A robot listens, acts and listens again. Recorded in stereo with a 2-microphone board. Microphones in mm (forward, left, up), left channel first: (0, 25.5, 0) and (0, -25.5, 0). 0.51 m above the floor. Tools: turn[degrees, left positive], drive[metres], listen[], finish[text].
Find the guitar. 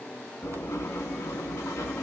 Action: listen[]
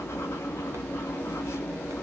Action: listen[]
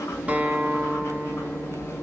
Thought: The guitar: about 30° right or 150° right.
Action: turn[-30]
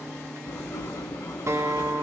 Thought: So it is at 120° right.
Action: turn[-120]
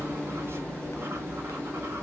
Action: listen[]
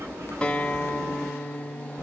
Thought: The guitar is now 20° left.
Action: turn[20]
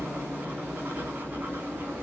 Action: listen[]
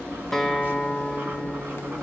Action: finish[Facing the guitar, under 1 m away.]